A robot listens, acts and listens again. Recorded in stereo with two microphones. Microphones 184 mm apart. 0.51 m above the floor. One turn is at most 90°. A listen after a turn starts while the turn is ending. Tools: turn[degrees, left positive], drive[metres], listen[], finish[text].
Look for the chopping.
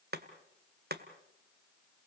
Thought: The chopping: about 55° right or 125° right.
Action: turn[-55]
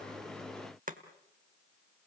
Thought: So it is at 55° right.
Action: turn[-55]
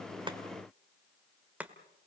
Thought: The chopping is now 10° right.
Action: turn[-10]
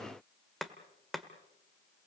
Action: finish[Facing the chopping, 1 to 2 m away.]